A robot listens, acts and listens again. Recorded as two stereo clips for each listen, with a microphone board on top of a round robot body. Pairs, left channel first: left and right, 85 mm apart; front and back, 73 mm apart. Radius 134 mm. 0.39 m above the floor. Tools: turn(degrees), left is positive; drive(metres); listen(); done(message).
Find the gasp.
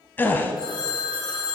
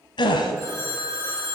turn(degrees=20)
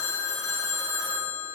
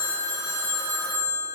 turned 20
done("I heard a gasp from this way, but can't make it out now.")